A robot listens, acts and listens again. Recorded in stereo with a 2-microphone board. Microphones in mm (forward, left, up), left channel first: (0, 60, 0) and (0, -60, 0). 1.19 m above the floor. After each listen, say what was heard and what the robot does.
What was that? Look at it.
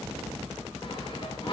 The sawing: about 45° left or 135° left. Turn 45° left.
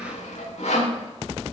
So it is at 90° left. Turn 90° left.
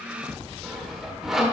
Facing the sawing.